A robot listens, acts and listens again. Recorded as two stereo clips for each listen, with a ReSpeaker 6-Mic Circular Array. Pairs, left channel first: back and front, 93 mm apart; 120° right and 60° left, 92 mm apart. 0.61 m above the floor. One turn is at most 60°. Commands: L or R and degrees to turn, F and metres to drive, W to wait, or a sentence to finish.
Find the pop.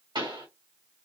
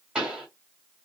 R20
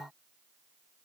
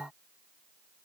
I heard a pop from this way, but can't make it out now.